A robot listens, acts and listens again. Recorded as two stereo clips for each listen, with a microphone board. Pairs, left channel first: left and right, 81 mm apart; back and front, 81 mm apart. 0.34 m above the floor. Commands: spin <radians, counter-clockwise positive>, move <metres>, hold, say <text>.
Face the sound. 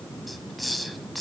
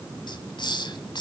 spin 3.14
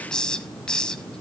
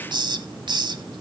spin 0.17
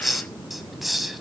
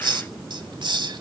say Facing the hiss, 1 to 2 m away.